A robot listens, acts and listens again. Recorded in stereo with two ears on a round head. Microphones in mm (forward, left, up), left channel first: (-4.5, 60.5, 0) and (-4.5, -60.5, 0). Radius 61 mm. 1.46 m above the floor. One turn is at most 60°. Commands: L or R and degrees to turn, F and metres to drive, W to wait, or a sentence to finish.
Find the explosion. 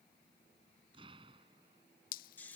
R40
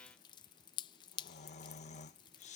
W
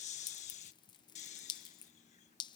I heard an explosion, but can't make it out now. It was about straight ahead or 100° right.